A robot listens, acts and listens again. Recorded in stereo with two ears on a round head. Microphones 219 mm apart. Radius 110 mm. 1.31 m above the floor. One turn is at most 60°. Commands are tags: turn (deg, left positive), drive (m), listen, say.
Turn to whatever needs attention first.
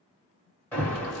<turn deg="30"/>
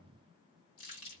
<listen/>
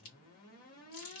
<listen/>
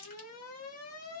<turn deg="60"/>
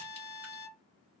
<turn deg="60"/>
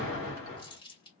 <turn deg="55"/>
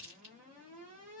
<turn deg="-30"/>
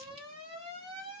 <turn deg="-20"/>
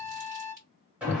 <say>Facing the alarm, 1 to 2 m away.</say>